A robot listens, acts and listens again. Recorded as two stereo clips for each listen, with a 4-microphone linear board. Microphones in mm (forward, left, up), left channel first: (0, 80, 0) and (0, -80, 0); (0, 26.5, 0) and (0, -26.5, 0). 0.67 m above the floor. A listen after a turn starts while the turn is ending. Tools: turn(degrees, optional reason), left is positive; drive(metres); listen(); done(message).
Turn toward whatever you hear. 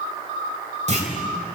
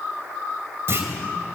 turn(degrees=-45, reason="The clunk: about 45° right or 135° right.")
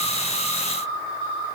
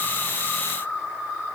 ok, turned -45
listen()
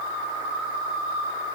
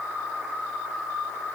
done("I heard a clunk, but can't make it out now. It was about straight ahead or 90° right.")